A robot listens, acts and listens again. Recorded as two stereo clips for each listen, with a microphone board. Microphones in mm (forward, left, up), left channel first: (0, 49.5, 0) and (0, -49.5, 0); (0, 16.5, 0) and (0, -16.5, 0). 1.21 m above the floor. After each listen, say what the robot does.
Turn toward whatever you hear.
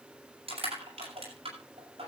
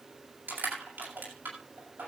Turn 90° right.
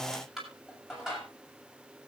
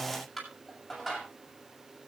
Found it: crushing, straight ahead.